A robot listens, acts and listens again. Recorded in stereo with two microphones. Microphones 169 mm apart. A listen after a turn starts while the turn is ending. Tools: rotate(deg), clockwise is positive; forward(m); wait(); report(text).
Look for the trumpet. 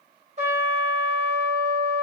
rotate(45)
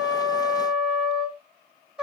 report("Found it: a trumpet, straight ahead, 2 to 4 m away.")